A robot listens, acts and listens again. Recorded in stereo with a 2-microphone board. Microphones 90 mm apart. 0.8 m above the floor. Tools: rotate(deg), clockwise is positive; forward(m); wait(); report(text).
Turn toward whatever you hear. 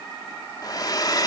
rotate(-45)
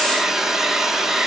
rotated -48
report("Found it: a hair dryer, straight ahead.")